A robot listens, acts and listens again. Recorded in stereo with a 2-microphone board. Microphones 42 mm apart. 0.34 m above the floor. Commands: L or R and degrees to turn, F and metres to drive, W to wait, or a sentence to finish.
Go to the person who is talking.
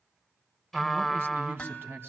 R65
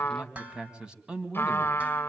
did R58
R25
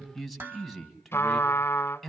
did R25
F1.0
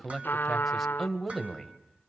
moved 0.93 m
F1.0
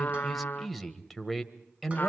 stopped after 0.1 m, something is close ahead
I am next to the man speaking.